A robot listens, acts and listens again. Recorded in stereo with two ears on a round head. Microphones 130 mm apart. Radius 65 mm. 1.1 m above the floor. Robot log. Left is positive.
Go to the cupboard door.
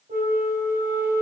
cmd idle
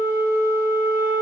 cmd idle
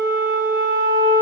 end: I can't make out a cupboard door, only a flute.